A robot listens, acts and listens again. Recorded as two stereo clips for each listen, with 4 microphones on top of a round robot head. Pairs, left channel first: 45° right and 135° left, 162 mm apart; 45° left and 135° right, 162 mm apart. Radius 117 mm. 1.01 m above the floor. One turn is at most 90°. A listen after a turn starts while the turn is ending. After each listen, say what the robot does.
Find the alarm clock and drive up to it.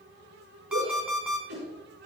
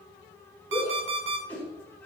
Turn 90° right.
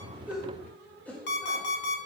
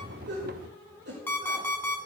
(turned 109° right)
Turn 35° right.
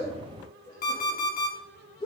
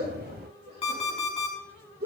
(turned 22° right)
Turn 10° right.
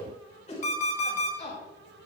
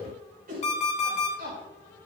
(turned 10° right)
Drive 1.0 m forward.
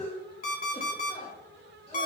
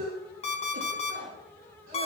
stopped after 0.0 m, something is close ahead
Something is in my way. I am facing the alarm clock but have not reached it.